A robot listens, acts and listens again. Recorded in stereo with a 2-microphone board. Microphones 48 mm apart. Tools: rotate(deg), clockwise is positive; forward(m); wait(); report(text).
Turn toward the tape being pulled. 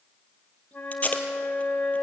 rotate(-30)
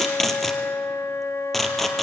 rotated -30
report("Facing the tape being pulled, 2 to 4 m away.")